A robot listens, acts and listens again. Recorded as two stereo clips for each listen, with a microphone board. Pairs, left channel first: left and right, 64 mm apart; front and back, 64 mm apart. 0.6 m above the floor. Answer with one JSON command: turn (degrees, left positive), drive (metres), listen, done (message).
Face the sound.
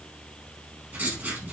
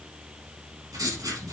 {"turn": -150}
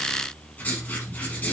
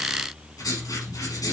{"turn": 30}
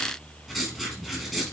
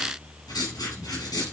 {"done": "Facing the writing, 2 to 4 m away."}